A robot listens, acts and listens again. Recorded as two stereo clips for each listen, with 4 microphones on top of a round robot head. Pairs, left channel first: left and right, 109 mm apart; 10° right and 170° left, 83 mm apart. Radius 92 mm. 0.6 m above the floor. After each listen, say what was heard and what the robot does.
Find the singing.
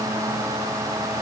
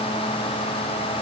Keep listening.
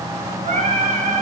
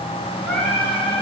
The singing: 95° right. Turn 95° right.
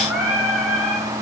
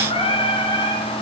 Found it: singing, straight ahead, over 4 m away.